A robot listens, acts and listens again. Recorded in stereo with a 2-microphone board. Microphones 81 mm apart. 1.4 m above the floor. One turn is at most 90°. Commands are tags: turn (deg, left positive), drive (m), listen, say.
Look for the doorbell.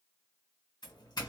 <turn deg="55"/>
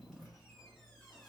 <say>Found it: a doorbell, straight ahead.</say>